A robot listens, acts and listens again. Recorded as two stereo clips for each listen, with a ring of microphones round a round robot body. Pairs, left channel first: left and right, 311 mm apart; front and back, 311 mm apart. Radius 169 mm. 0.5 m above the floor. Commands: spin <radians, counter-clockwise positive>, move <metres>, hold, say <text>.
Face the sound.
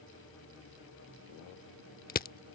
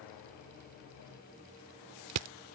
spin 2.62
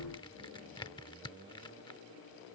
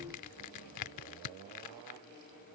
spin 0.26
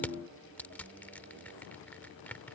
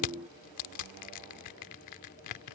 say Found it: crushing, straight ahead.